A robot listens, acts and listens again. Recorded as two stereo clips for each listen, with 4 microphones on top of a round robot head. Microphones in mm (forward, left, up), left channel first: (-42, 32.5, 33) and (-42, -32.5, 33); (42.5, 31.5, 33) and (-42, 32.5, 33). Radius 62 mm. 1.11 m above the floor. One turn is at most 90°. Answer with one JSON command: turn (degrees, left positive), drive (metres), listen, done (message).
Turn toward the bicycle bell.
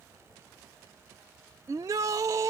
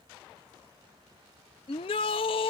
{"listen": true}
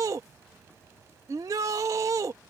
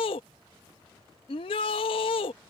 {"listen": true}
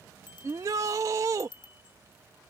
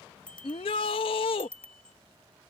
{"turn": 75}
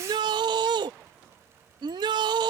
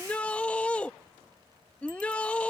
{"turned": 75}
{"listen": true}
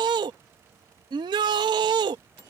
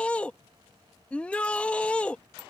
{"turn": 30}
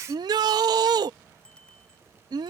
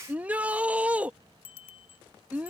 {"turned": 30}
{"done": "Found it: a bicycle bell, straight ahead."}